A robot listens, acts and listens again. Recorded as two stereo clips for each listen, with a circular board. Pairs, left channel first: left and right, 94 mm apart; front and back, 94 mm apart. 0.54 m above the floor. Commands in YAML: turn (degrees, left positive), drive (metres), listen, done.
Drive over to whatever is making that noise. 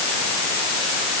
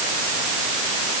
listen: true
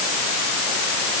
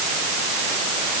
listen: true
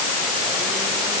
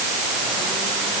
done: "I can't make out anything."